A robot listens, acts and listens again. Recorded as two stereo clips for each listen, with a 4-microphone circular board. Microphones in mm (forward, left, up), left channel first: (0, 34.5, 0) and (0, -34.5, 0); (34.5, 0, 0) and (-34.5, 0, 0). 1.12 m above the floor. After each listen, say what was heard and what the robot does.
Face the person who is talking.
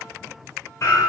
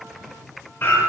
Keep listening.
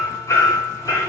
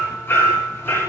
Keep listening.
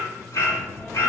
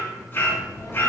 The child speaking: 15° left. Turn 15° left.
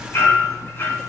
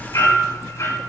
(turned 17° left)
Found it: a child speaking, straight ahead, 1 to 2 m away.